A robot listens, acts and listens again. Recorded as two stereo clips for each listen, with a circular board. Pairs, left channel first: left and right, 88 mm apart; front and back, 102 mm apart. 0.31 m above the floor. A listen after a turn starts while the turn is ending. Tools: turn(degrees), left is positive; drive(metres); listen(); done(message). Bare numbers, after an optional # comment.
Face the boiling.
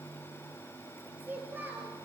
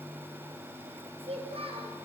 listen()
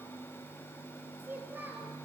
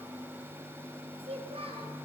listen()
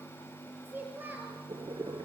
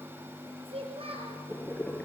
# The boiling: 70° right.
turn(-70)
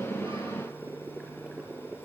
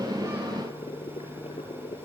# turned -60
# The boiling is now 10° right.
turn(-10)
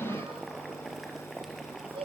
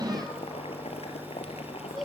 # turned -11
done("Facing the boiling, 2 to 4 m away.")